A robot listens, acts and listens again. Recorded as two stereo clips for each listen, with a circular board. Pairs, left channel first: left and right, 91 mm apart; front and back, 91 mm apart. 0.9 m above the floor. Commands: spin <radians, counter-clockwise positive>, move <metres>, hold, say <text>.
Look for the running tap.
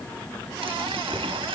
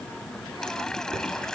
spin -1.48
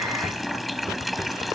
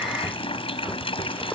say Facing the running tap.